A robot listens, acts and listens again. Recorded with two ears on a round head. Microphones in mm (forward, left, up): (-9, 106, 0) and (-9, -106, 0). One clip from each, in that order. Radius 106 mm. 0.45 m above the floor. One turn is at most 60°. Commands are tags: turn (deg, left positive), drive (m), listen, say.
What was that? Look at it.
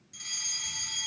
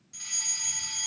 <turn deg="-30"/>
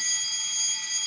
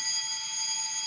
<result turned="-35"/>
<turn deg="25"/>
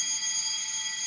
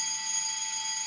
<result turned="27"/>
<say>Facing the fire alarm, 2 to 4 m away.</say>